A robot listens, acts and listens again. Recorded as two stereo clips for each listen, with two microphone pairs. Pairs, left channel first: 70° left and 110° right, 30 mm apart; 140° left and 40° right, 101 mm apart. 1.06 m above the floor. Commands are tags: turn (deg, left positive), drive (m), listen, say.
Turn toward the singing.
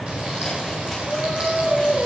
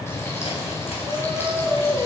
<turn deg="-95"/>
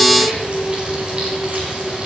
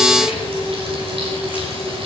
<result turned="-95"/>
<say>Found it: singing, straight ahead.</say>